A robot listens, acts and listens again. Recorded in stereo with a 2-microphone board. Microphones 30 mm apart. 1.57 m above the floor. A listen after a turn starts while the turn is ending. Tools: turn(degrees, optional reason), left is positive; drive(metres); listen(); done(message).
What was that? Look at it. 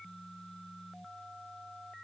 listen()
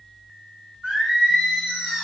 turn(degrees=-45, reason="The singing: about 45° right or 135° right.")
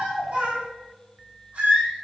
turn(degrees=-105, reason="So it is at 105° right.")
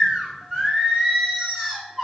turn(degrees=-10, reason="The singing is now 10° right.")
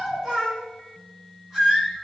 done("Found it: singing, straight ahead, over 4 m away.")